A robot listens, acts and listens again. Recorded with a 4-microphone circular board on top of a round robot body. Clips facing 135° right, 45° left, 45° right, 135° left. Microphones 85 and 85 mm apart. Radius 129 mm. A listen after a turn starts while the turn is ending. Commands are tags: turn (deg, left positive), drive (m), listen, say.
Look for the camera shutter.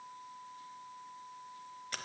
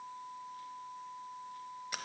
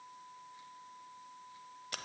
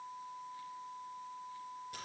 <listen/>
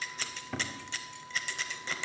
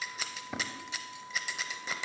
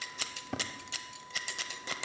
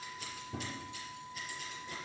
<listen/>
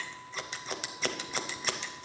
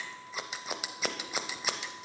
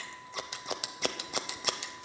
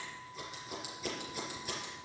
<say>I can't make out a camera shutter, only scissors.</say>